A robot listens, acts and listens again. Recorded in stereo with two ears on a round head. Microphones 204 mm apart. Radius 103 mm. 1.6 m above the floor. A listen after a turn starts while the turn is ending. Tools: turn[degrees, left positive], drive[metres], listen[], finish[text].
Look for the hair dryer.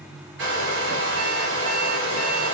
Thought: The hair dryer: about 60° right or 120° right.
Action: turn[-60]
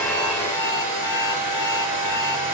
Thought: So it is at 55° right.
Action: turn[-55]
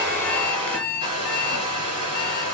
Thought: The hair dryer is now 20° right.
Action: turn[-20]
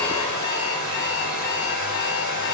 Action: finish[Found it: a hair dryer, straight ahead, over 4 m away.]